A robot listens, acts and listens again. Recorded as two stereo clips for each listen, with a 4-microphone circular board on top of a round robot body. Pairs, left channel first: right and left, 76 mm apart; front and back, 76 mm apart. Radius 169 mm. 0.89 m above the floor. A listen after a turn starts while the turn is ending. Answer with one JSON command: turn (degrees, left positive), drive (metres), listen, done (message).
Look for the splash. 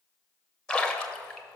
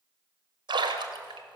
{"turn": -170}
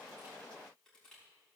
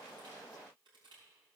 {"done": "I heard a splash from this way, but can't make it out now."}